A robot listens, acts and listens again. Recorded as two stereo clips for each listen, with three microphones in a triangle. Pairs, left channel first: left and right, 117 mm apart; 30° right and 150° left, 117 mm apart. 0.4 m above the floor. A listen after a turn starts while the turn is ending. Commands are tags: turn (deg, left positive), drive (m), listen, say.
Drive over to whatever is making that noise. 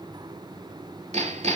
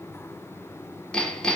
<turn deg="-110"/>
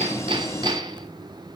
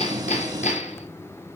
<turn deg="-35"/>
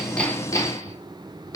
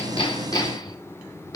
<turn deg="25"/>
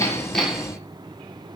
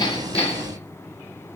<listen/>
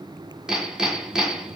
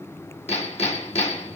<drive m="1.0"/>
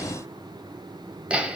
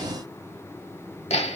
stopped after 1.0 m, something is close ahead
<turn deg="-10"/>
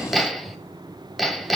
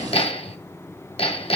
<say>Arrived at the hammering, straight ahead.</say>